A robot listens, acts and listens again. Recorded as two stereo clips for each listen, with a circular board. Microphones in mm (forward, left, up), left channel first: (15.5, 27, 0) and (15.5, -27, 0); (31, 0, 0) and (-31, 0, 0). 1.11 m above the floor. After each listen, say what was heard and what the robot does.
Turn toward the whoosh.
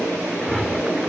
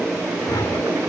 Found it: a whoosh, straight ahead.